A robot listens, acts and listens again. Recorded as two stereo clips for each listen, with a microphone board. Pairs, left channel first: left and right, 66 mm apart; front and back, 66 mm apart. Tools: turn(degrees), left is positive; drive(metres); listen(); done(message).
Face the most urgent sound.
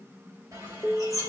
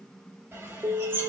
turn(degrees=180)
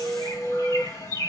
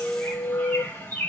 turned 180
turn(degrees=10)
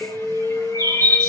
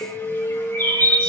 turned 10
done("Facing the alarm.")